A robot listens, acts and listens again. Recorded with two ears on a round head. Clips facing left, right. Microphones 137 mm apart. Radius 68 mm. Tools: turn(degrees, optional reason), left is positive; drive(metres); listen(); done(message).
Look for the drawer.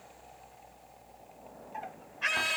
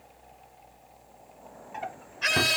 turn(degrees=-75, reason="The drawer: about 75° right or 105° right.")
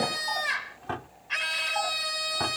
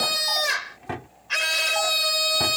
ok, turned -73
turn(degrees=-15, reason="So it is at 15° right.")
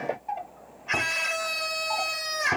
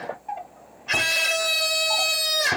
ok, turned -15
done("Facing the drawer.")